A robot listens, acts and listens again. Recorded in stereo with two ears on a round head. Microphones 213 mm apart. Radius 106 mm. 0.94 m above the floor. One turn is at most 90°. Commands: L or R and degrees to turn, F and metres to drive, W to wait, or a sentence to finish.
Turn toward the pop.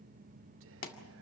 L40
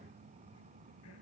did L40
W
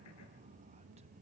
I heard a pop, but can't make it out now. It was about straight ahead or 100° left.